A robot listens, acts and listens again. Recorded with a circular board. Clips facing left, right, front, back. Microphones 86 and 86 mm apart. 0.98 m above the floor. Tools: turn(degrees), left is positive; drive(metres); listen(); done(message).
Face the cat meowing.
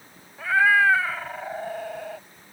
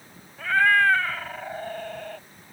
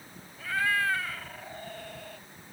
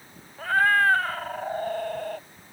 turn(degrees=170)
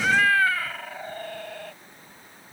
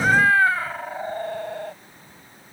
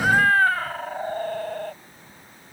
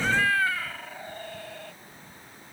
turn(degrees=-35)
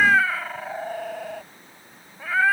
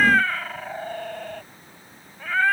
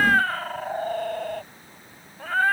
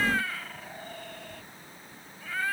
turn(degrees=10)
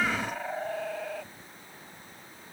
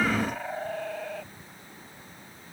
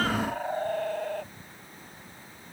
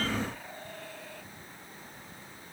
done("Facing the cat meowing.")